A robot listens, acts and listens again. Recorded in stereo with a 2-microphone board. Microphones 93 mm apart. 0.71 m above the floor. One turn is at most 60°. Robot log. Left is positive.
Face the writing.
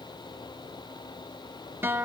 cmd idle
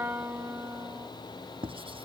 cmd yaw -60
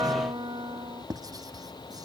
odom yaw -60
note: So it is at 45° right.
cmd yaw -45
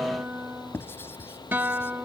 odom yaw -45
note: The writing is now 25° left.
cmd yaw +25
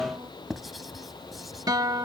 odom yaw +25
end: Facing the writing.